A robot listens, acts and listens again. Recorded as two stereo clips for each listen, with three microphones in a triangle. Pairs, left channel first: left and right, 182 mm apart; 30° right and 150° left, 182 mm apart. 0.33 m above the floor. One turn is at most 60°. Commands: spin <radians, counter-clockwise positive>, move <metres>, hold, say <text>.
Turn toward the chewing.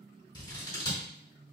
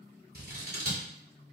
hold
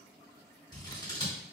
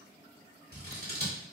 hold
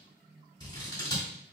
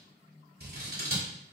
say I can't make out chewing, only scissors.